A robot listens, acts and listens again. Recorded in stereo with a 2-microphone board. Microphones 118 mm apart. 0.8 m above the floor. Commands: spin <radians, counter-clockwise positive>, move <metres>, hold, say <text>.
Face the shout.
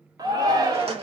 spin -0.61
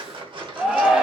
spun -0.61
say Facing the shout.